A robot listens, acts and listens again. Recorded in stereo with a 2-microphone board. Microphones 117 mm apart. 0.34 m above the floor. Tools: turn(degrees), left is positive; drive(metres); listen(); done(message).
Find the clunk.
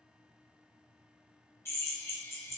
listen()
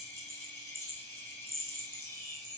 listen()
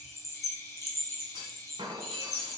turn(degrees=-40)
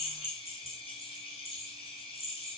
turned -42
listen()
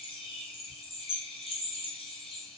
done("I heard a clunk, but can't make it out now. It was about straight ahead or 95° right.")